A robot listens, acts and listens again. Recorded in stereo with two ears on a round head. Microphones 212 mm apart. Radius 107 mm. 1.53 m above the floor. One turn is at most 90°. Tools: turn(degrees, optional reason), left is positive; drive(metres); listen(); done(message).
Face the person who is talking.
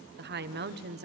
turn(degrees=-45, reason="The woman speaking: about 45° right or 135° right.")
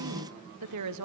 turn(degrees=-90, reason="So it is at 90° right.")
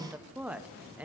done("Found it: a woman speaking, straight ahead.")